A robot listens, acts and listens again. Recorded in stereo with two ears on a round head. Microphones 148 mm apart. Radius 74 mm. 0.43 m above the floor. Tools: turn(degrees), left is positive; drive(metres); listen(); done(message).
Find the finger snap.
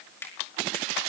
turn(degrees=15)
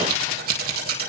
listen()
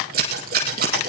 listen()
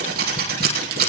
done("I heard a finger snap, but can't make it out now. It was about straight ahead or 150° left.")